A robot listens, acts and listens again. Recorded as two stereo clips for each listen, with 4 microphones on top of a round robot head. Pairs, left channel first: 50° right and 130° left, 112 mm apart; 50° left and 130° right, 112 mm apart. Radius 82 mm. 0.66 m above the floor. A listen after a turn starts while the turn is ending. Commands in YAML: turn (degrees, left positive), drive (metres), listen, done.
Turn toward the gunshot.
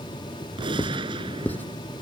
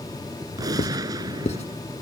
turn: 175
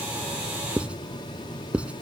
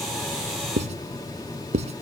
done: "Facing where the gunshot came from. I can't hear it now."